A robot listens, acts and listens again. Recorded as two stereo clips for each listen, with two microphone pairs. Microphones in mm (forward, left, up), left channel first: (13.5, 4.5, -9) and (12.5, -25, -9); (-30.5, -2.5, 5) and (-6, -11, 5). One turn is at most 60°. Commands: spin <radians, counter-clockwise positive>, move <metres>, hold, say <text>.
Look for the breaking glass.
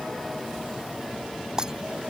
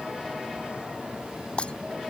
spin -1.05
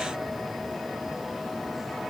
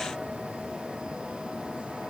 spin -1.05
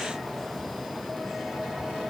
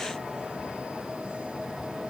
spin -0.70
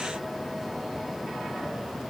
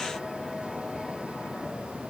say I heard breaking glass from this way, but can't make it out now.